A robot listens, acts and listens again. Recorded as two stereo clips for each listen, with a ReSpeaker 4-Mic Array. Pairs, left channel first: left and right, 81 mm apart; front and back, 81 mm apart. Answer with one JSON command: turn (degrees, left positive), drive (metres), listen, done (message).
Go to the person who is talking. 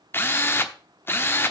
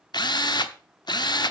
{"listen": true}
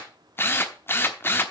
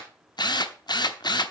{"listen": true}
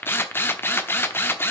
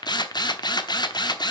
{"done": "I can't make out anyone speaking, only a drill."}